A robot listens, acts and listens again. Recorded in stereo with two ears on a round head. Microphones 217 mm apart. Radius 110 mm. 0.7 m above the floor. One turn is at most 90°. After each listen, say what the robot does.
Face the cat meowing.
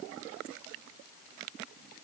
Keep listening.
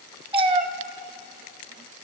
Turn 25° right.
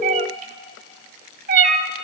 Turn 90° right.
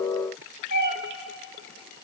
Turn 35° right.
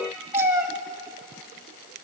Turn 15° right.
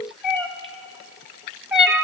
Facing the cat meowing.